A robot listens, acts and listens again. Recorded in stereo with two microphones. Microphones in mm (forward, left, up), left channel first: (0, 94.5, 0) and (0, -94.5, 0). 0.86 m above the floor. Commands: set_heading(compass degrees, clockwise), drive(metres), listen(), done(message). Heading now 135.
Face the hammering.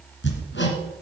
set_heading(45)
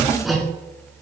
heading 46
done("Found it: hammering, straight ahead.")